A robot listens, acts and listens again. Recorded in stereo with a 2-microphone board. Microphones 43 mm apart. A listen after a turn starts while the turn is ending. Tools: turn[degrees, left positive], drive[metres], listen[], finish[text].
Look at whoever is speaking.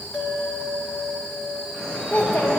Thought: The child speaking: about 70° left or 110° left.
Action: turn[70]
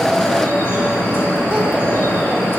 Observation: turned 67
Action: listen[]
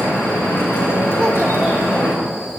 Action: listen[]
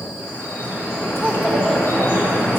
Action: finish[I heard a child speaking, but can't make it out now. It was about 5° left or 40° left.]